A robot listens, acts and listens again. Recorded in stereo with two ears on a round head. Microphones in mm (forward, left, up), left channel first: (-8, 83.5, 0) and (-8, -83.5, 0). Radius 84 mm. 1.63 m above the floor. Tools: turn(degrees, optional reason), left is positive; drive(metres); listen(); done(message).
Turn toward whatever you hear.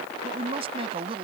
turn(degrees=-30, reason="The woman speaking: about 30° right or 150° right.")
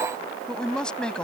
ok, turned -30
done("Found it: a woman speaking, straight ahead.")